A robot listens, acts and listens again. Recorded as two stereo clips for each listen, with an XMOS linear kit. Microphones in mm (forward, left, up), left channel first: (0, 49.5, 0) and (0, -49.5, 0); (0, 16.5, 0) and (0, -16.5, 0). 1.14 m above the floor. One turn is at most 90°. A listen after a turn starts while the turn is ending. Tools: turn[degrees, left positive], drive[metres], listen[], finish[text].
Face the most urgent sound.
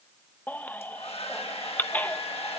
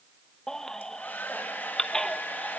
Thought: The baby crying: about 15° left or 165° left.
Action: turn[15]
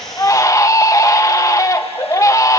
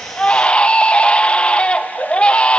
Thought: So it is at 145° left.
Action: turn[90]
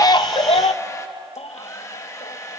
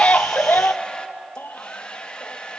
Thought: The baby crying is now 100° left.
Action: turn[90]
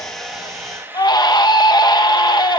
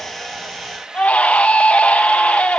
Thought: The baby crying is now 45° left.
Action: turn[45]
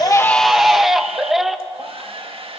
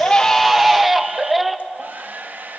Action: finish[Facing the baby crying, under 1 m away.]